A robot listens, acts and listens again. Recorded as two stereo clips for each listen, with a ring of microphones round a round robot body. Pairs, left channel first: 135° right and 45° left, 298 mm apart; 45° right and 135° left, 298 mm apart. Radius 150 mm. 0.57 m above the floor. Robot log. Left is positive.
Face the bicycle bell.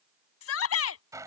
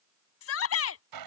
cmd idle
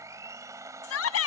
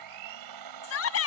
cmd idle
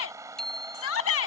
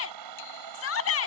note: The bicycle bell: 45° right.
cmd yaw -45
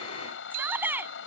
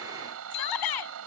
cmd idle
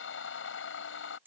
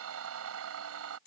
cmd idle
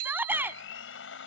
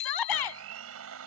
end: Facing the bicycle bell.